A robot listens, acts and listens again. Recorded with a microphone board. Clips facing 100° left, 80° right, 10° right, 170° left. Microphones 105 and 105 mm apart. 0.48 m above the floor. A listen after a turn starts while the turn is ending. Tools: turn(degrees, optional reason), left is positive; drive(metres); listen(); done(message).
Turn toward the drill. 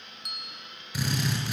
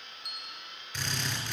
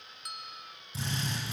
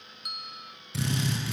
turn(degrees=-175, reason="The drill: 175° right.")
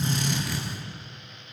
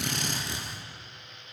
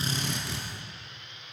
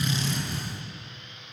turn(degrees=-15, reason="The drill is now 15° right.")
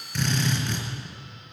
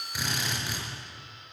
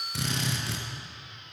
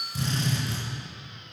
done("Found it: a drill, straight ahead, over 4 m away.")